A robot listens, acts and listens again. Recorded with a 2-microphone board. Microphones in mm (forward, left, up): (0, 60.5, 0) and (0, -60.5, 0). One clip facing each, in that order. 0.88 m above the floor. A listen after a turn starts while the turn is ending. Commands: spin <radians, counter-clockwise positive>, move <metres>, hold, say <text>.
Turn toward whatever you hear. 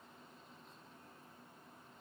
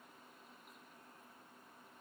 hold
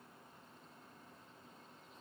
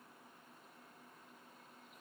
hold
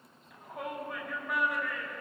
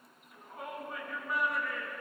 spin 1.57
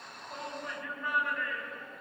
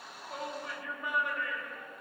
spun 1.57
spin -0.26
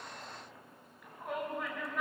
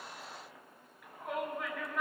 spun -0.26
say Found it: a shout, straight ahead, over 4 m away.